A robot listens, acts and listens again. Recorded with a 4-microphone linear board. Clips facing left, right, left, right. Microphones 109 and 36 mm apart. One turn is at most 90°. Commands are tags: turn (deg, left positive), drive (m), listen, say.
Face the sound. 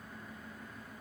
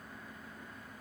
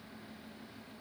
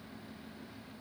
<listen/>
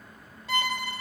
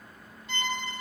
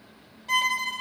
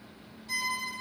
<turn deg="90"/>
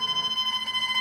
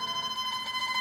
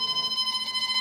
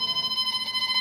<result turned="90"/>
<say>Facing the violin.</say>